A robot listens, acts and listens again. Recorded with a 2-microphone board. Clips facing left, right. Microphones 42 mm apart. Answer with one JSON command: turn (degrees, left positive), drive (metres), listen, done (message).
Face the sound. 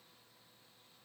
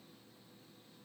{"listen": true}
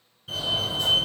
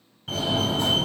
{"turn": -55}
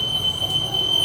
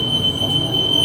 {"turn": -30}
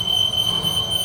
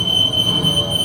{"turn": -20}
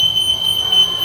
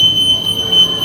{"done": "Facing the fire alarm, 1 to 2 m away."}